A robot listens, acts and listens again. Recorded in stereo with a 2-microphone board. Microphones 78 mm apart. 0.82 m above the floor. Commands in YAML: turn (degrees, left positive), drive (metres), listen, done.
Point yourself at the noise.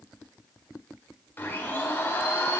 turn: 25
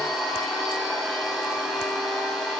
done: "Found it: a blender, straight ahead, 2 to 4 m away."